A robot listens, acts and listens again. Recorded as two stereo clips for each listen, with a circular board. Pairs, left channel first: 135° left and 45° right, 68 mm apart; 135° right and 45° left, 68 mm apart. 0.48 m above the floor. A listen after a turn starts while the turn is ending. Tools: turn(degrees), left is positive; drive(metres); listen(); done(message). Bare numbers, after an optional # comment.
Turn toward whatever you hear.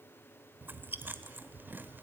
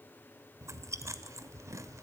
# The chewing: 10° left.
turn(10)
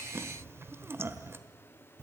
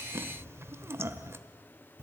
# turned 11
done("Found it: chewing, straight ahead.")